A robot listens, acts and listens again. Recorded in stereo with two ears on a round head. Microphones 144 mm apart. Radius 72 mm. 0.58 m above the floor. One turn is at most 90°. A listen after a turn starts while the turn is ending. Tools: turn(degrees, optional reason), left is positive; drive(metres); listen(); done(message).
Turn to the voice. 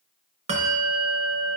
listen()
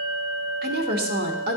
turn(degrees=-65, reason="The woman speaking: about 65° right or 115° right.")
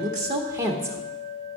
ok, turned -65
turn(degrees=-20, reason="So it is at 20° right.")
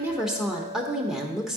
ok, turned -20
done("Facing the woman speaking.")